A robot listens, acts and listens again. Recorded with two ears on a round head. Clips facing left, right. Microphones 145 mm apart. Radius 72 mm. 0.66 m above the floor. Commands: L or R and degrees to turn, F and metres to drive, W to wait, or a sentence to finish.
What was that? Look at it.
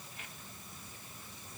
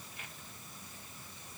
W
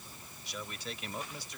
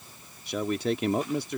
R45
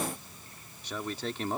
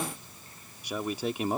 R15
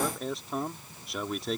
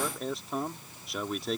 Found it: a man speaking, straight ahead.